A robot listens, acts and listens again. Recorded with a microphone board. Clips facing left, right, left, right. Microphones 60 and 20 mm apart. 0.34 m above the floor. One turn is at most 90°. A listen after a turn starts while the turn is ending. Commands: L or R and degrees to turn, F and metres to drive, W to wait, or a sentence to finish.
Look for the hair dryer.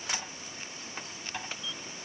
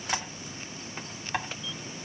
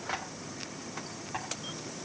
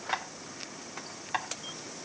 W
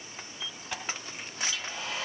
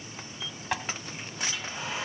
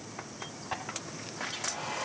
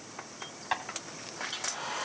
R25
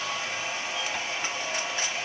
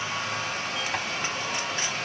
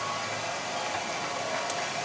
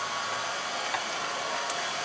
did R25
R90
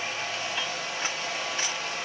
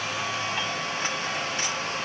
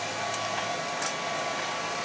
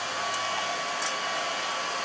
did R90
R65
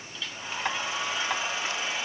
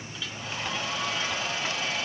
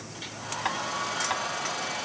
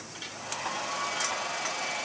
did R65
L20
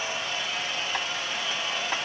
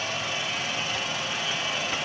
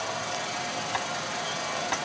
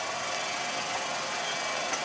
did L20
Facing the hair dryer.